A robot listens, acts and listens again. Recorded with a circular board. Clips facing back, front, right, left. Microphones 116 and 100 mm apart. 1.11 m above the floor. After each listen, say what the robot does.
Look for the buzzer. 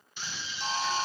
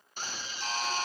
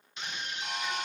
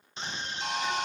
Turn 110° left.
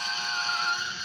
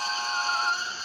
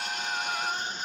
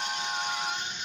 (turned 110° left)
Turn 25° left.
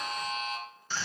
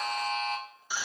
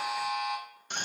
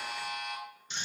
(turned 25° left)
Found it: a buzzer, straight ahead.